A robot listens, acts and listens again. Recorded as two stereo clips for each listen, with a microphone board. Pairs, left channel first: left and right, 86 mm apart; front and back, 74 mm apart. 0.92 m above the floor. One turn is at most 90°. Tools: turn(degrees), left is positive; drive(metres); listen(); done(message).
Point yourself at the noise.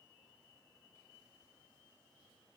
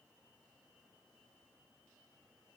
listen()
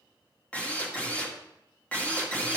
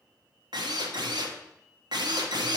turn(degrees=90)
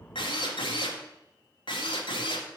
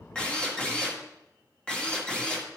turn(degrees=75)
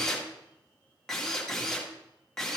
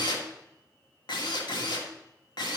done("Found it: a drill, straight ahead, 1 to 2 m away.")